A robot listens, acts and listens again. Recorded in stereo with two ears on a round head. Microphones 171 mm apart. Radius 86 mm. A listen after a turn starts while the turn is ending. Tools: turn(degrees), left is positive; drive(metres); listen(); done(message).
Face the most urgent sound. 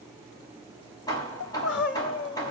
turn(degrees=70)
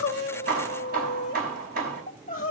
turn(degrees=40)
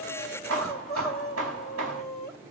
done("Facing the crying, 2 to 4 m away.")